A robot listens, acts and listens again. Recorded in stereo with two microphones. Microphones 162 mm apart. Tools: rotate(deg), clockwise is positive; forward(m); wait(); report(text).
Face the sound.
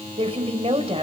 rotate(40)
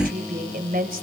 rotate(95)
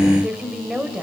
report("Facing the woman speaking.")